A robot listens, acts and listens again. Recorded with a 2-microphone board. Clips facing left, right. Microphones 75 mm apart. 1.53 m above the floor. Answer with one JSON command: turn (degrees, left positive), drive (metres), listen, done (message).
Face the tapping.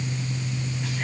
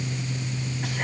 {"listen": true}
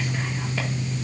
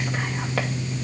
{"listen": true}
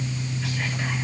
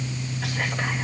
{"done": "I can't make out tapping."}